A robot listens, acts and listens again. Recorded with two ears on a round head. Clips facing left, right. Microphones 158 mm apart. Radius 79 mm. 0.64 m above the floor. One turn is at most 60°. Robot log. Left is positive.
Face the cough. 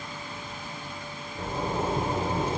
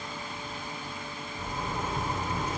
cmd idle
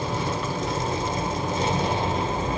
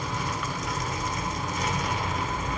cmd idle
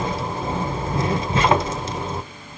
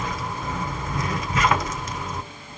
end: I can't make out a cough, only a zipper.